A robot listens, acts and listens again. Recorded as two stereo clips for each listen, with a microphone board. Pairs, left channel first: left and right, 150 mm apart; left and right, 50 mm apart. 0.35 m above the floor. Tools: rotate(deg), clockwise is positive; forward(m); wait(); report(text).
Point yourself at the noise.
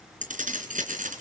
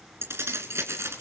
rotate(65)
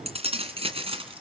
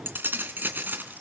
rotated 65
rotate(40)
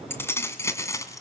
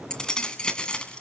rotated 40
rotate(-20)
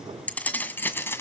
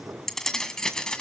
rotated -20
rotate(-15)
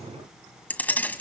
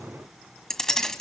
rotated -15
rotate(-10)
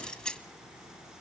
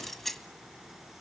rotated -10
report("Found it: keys jangling, straight ahead, 1 to 2 m away.")